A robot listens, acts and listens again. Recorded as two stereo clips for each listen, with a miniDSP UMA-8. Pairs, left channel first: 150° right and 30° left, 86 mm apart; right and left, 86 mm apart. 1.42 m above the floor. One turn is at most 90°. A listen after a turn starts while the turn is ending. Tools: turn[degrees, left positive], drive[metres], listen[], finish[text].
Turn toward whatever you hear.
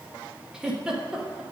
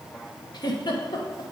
Thought: The giggle: 50° right.
Action: turn[-50]
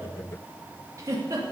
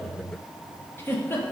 Thought: The giggle is now 25° right.
Action: turn[-25]
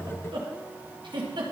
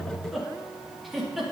Action: finish[Found it: a giggle, straight ahead.]